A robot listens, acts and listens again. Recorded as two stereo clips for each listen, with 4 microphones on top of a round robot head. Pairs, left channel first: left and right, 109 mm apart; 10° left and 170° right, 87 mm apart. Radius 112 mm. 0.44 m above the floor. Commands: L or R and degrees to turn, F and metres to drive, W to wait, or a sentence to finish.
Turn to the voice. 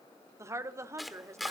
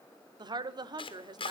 R150
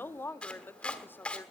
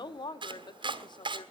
L20
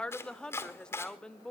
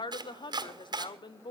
L10
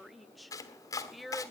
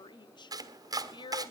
Found it: a woman speaking, straight ahead, 1 to 2 m away.